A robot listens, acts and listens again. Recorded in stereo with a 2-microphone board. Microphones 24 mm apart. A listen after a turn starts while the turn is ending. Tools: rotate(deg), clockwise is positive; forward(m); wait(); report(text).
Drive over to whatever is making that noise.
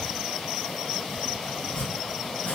rotate(-55)
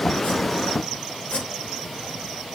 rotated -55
rotate(-60)
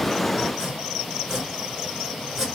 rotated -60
rotate(15)
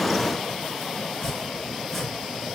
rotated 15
forward(1.0)
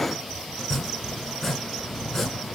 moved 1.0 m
rotate(-15)
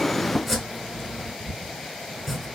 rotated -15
forward(1.0)
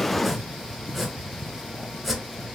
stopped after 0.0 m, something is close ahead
report("I am next to the chopping.")